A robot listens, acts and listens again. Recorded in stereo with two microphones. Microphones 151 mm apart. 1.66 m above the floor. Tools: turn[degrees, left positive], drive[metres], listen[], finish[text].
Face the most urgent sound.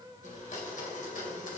Action: listen[]
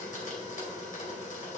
Action: listen[]
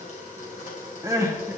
Thought: The crying: about 20° right or 160° right.
Action: turn[-20]
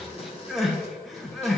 Action: finish[Found it: crying, straight ahead.]